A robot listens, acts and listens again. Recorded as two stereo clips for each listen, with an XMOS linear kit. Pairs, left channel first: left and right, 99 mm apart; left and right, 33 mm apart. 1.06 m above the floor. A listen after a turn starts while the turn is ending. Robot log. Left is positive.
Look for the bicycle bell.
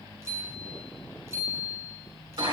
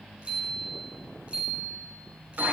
note: The bicycle bell: about 30° right or 150° right.
cmd yaw -30
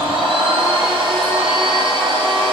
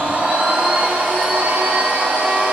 cmd idle
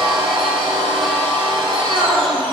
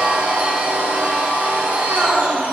cmd idle
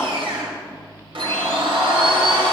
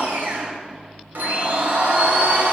end: I heard a bicycle bell, but can't make it out now. It was about straight ahead or 120° right.